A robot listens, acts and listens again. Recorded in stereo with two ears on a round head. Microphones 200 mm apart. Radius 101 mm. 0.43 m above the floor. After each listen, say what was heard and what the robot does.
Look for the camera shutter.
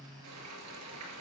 Keep listening.
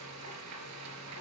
Keep listening.
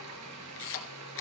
The camera shutter: about 60° left or 120° left. Turn 60° left.
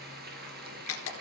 So it is at 60° left. Turn 60° left.
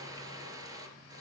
Keep listening.
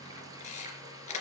The camera shutter is now 30° left. Turn 30° left.
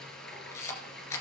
The camera shutter is now 10° left. Turn 10° left.
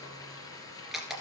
Facing the camera shutter, 2 to 4 m away.